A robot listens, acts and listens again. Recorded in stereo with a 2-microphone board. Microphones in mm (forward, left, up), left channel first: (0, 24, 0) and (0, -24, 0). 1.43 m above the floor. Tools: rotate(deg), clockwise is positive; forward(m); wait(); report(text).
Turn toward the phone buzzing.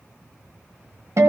wait()
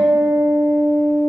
wait()
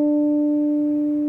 report("I can't make out a phone buzzing to turn to.")